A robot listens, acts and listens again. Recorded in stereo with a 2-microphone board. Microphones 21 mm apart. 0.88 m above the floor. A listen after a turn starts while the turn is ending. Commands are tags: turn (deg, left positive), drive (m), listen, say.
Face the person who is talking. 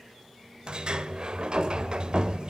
<listen/>
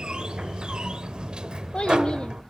<turn deg="45"/>
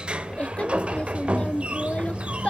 <turn deg="90"/>
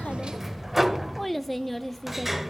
<say>Facing the child speaking, under 1 m away.</say>